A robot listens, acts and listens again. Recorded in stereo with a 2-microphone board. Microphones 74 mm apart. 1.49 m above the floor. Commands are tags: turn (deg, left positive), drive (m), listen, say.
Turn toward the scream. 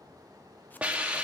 <listen/>
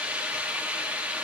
<listen/>
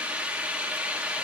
<say>I can't make out a scream, only a hiss.</say>